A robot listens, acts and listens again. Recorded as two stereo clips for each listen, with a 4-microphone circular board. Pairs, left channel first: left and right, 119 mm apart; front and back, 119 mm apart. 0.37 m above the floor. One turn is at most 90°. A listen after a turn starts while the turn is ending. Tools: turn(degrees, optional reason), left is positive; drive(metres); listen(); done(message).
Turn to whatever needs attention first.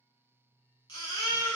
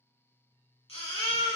turn(degrees=40, reason="The baby crying: 40° left.")
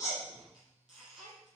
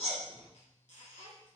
done("Found it: a baby crying, straight ahead.")